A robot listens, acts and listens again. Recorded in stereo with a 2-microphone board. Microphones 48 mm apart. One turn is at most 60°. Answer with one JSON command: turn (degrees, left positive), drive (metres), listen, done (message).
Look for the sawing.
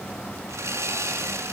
{"turn": -60}
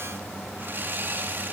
{"turn": -45}
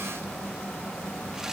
{"listen": true}
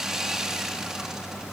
{"turn": -10}
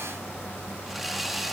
{"done": "Facing the sawing."}